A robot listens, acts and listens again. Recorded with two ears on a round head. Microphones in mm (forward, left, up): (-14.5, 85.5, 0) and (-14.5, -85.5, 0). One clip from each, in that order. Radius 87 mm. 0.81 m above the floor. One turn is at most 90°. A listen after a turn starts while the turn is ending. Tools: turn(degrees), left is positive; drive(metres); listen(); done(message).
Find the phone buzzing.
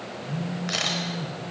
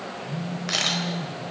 turn(degrees=25)
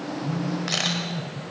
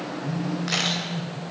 done("Facing the phone buzzing, over 4 m away.")